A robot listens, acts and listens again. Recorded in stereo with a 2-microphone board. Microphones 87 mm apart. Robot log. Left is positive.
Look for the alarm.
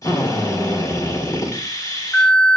note: The alarm: about 25° left or 155° left.
cmd yaw +25
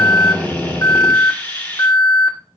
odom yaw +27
note: So it is at 125° left.
cmd yaw +125
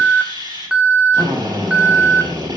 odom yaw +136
note: The alarm is now 15° right.
cmd yaw -15
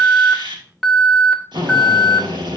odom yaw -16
end: Facing the alarm, 1 to 2 m away.